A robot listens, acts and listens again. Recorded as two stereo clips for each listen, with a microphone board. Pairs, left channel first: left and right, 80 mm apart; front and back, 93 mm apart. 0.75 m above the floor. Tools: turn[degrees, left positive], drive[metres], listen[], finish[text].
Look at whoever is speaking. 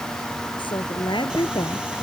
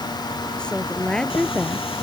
Thought: The woman speaking: 80° left.
Action: turn[80]
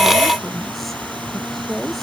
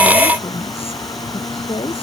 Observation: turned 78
Action: finish[Facing the woman speaking.]